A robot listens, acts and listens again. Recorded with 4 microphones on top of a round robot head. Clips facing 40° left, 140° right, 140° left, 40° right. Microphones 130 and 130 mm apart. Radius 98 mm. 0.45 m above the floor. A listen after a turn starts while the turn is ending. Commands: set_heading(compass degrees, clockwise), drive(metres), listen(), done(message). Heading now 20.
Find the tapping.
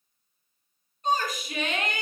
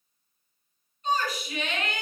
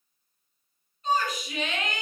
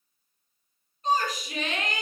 listen()
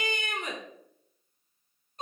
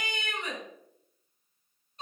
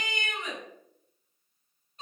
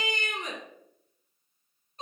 listen()
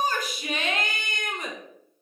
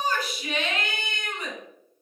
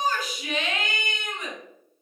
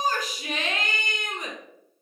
done("I can't make out tapping, only a shout.")